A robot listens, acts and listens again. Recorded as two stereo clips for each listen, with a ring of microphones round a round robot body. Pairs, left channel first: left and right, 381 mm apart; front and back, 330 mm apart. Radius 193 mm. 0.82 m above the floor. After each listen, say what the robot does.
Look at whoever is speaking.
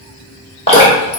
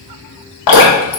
Keep listening.
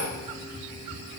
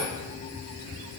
Keep listening.
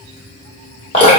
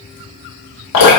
I can't make out anyone speaking, only dripping.